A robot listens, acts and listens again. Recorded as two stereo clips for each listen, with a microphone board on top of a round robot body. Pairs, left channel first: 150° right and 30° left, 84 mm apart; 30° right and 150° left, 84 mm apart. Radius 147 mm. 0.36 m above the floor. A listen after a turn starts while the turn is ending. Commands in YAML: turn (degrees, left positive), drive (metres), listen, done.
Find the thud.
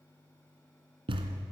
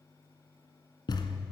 turn: 10
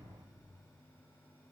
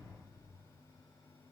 done: "I heard a thud from this way, but can't make it out now."